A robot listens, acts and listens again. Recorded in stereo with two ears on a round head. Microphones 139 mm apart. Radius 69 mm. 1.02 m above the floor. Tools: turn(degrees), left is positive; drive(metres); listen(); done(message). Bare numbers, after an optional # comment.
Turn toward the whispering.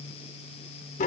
listen()
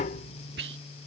turn(-90)
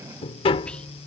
listen()
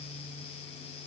listen()
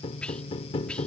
done("Facing the whispering.")